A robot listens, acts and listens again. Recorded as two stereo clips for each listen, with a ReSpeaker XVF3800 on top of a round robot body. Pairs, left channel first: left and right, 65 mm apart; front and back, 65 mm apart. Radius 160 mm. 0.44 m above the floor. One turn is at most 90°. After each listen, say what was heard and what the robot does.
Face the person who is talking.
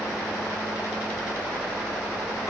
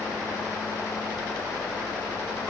Keep listening.
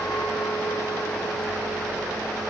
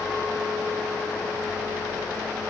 Keep listening.
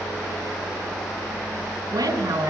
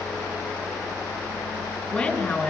The woman speaking: 65° right. Turn 65° right.
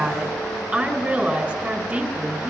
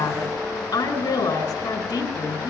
The woman speaking is now 10° right. Turn 10° right.
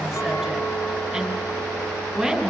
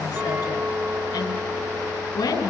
Facing the woman speaking, over 4 m away.